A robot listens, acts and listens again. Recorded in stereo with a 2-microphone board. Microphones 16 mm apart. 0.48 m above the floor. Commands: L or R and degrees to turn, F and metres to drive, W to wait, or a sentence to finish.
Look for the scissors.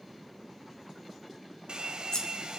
L45
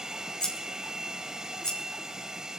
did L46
L90
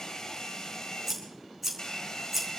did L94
Found it: scissors, straight ahead.